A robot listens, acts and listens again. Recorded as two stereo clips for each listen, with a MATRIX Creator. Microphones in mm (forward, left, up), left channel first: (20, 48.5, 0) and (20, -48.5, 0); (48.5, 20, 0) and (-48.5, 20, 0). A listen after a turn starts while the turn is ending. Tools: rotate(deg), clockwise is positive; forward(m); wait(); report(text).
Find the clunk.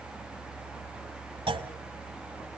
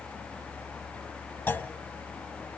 rotate(70)
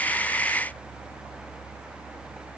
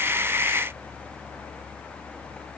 report("Facing where the clunk came from. I can't hear it now.")